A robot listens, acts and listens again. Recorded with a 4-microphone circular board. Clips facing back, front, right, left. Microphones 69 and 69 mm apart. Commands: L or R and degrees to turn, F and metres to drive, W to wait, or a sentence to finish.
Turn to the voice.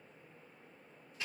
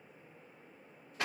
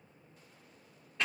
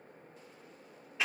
W
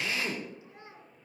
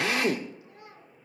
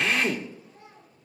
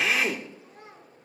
L115
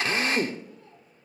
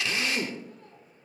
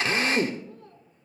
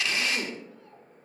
W
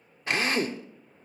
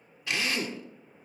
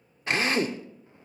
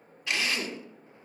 W
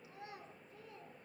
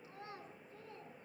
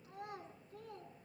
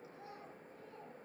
R60
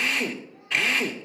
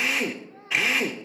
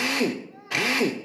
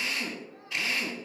W
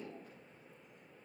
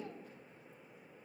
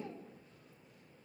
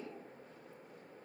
W
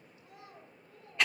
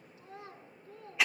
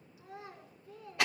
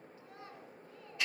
R10
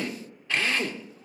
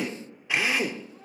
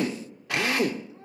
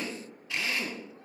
Facing the child speaking.